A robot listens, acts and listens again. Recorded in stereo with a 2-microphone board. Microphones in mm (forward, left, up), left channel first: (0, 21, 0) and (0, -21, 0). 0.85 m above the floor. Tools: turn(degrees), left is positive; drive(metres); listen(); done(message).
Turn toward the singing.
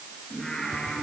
turn(degrees=20)
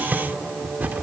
turn(degrees=140)
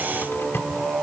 done("Found it: singing, straight ahead, over 4 m away.")